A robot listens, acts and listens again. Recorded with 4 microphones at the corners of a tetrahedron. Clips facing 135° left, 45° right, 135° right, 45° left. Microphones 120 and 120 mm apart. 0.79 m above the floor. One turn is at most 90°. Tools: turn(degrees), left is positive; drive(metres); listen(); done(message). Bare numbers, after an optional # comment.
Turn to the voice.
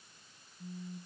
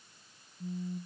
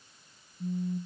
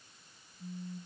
listen()
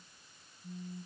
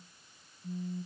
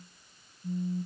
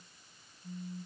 listen()
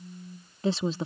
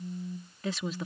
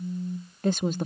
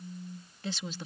# The woman speaking: 170° right.
turn(-90)
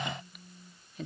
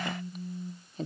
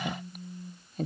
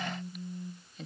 # The woman speaking is now 95° right.
turn(-90)
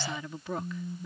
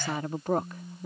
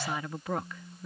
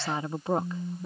# The woman speaking is now 15° right.
turn(-15)
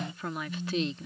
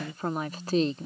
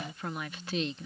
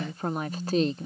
done("Found it: a woman speaking, straight ahead.")